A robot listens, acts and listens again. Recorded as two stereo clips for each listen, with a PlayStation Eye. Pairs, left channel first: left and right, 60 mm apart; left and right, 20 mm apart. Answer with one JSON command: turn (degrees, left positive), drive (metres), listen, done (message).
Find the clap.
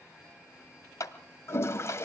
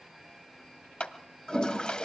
{"turn": 65}
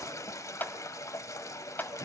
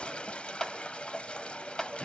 {"turn": 35}
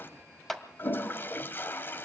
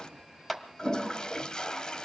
{"done": "Found it: a clap, straight ahead, 1 to 2 m away."}